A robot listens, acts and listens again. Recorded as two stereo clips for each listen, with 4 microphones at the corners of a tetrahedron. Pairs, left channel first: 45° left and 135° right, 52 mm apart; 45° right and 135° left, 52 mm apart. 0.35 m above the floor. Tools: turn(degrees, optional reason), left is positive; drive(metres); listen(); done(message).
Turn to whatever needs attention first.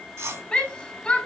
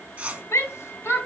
turn(degrees=-25, reason="The shout: 25° right.")
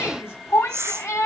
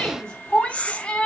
turn(degrees=25, reason="The shout is now 25° left.")
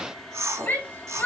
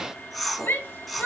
done("Found it: a shout, straight ahead, 2 to 4 m away.")